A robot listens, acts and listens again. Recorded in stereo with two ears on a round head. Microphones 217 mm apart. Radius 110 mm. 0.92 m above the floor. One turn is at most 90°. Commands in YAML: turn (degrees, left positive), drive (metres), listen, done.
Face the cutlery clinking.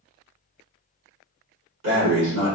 listen: true
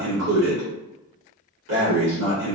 listen: true
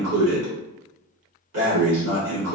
done: "I can't make out cutlery clinking, only breathing."